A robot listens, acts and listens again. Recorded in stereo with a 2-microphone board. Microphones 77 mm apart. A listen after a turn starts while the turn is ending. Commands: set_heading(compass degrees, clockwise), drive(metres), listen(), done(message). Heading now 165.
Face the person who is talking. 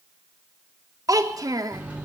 set_heading(215)
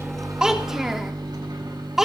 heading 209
done("Found it: a child speaking, straight ahead, 1 to 2 m away.")